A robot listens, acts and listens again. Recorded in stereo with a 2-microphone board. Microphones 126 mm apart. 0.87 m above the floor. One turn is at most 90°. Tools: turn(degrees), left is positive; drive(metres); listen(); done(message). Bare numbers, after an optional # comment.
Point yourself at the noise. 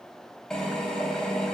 turn(30)
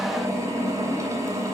# So it is at 25° right.
turn(-25)
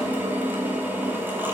# The drill is now 15° right.
turn(-15)
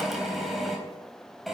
done("Found it: a drill, straight ahead, over 4 m away.")